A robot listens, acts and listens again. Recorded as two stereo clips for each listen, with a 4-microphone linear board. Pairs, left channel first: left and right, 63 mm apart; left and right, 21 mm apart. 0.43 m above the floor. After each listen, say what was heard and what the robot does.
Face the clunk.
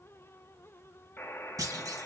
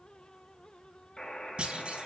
The clunk: about 65° right or 115° right. Turn 65° right.
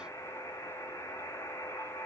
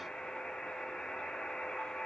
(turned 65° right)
Keep listening.
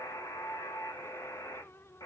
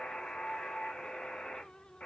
I heard a clunk, but can't make it out now. It was about straight ahead or 50° right.